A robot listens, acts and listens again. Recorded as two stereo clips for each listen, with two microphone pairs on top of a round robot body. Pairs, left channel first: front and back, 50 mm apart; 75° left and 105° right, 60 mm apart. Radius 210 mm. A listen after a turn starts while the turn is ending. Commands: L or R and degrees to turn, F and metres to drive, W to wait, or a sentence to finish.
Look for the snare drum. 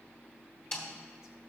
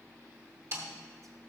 R65
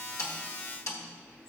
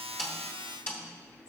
L25
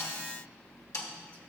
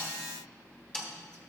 L10
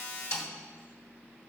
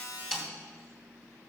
Facing the snare drum.